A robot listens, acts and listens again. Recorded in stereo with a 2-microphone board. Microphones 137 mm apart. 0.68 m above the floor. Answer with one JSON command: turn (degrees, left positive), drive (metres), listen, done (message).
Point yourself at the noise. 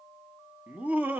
{"turn": -30}
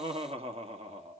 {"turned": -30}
{"turn": -130}
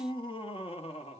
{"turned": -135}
{"turn": 50}
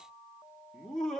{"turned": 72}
{"done": "Found it: laughter, straight ahead."}